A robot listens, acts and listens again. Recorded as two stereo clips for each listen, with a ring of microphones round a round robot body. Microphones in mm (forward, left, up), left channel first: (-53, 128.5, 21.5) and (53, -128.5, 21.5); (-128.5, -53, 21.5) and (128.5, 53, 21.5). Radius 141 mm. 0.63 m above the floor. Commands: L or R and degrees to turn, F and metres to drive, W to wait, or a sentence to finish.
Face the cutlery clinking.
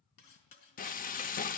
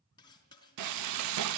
L125
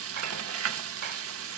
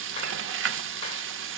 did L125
W
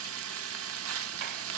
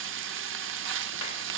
W
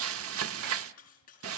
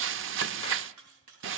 L50
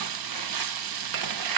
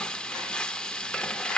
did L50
W
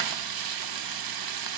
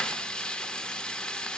W
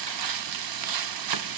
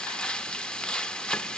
Facing where the cutlery clinking came from. I can't hear it now.